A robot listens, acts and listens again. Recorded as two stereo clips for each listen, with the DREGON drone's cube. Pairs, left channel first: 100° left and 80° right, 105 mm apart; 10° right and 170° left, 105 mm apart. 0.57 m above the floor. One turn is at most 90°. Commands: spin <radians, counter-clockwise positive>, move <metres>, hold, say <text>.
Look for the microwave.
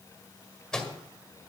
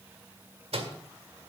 spin -1.57
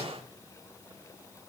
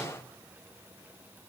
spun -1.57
spin -1.40
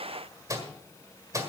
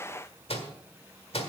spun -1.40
spin -0.44
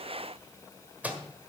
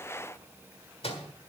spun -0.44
say Found it: a microwave, straight ahead, 1 to 2 m away.